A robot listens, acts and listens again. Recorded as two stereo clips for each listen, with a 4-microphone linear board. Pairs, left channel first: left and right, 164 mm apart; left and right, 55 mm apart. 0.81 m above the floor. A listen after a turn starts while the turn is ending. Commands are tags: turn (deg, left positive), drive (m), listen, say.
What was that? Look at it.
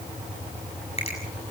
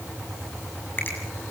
<turn deg="40"/>
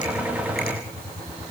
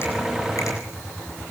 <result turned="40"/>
<listen/>
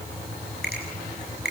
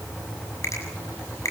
<turn deg="100"/>
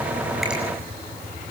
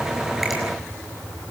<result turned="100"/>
<listen/>
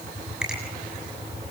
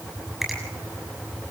<say>Found it: a finger snap, straight ahead, over 4 m away.</say>